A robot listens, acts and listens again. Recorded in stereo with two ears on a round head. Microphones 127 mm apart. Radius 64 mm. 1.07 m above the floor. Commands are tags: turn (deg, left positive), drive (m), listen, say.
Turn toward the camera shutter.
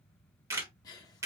<turn deg="-20"/>
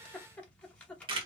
<turn deg="-135"/>
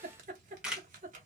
<say>Facing the camera shutter, 1 to 2 m away.</say>